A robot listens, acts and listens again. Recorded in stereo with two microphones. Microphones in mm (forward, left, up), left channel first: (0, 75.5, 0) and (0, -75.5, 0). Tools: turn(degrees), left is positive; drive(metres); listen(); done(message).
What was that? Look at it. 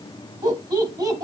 turn(degrees=-25)
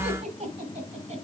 turn(degrees=-135)
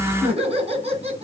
turn(degrees=-45)
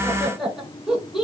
done("Facing the laughter.")